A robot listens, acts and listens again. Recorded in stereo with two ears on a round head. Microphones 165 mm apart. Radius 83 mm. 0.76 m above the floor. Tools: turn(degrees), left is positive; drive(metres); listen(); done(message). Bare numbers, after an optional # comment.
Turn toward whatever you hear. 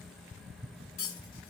# The cutlery clinking: about 70° left or 110° left.
turn(70)
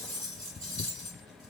done("Found it: cutlery clinking, straight ahead.")